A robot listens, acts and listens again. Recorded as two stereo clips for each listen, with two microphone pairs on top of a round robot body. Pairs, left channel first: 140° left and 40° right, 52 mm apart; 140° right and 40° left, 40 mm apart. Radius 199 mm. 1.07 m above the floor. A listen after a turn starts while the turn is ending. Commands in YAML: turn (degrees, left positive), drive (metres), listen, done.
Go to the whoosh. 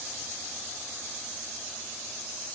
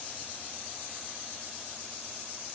listen: true
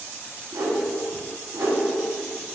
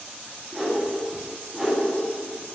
turn: -40
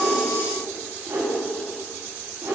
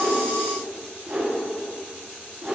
turn: -15
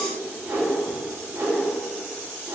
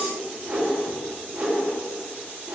drive: 1.0
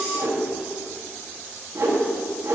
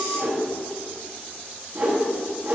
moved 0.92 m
turn: -10
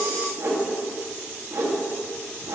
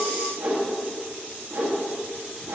drive: 1.0
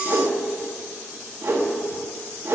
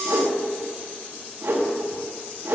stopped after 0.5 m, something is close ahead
done: "I am next to the whoosh."